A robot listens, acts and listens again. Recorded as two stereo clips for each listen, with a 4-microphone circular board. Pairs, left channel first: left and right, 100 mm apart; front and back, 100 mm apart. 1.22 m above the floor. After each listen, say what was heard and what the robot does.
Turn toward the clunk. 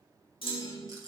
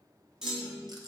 The clunk: 100° left. Turn 100° left.
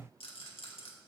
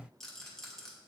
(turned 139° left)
Nothing new. It was at 40° right. Turn 40° right.
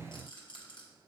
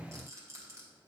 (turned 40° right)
I heard a clunk from this way, but can't make it out now.